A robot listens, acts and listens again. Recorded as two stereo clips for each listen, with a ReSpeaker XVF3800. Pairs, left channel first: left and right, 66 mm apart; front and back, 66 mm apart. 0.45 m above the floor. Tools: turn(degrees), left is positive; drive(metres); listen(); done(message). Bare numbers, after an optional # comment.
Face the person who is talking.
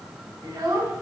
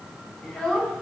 # The child speaking: 80° right.
turn(-80)
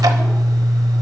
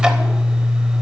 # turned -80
listen()
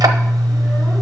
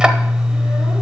listen()
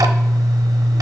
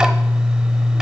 done("Facing where the child speaking came from. I can't hear it now.")